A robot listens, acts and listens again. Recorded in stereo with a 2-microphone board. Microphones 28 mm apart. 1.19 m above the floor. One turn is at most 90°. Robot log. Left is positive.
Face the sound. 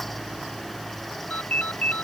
cmd yaw +90
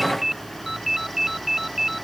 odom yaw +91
note: So it is at 10° right.
cmd yaw -10
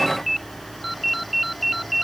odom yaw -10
end: Found it: a ringtone, straight ahead.